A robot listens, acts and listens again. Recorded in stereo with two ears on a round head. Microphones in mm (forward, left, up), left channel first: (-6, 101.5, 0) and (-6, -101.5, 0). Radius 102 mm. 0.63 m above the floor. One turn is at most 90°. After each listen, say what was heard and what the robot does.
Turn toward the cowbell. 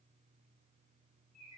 Keep listening.
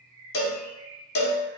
The cowbell: about 45° left or 135° left. Turn 45° left.
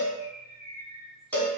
So it is at 10° left. Turn 10° left.
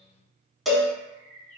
Facing the cowbell, under 1 m away.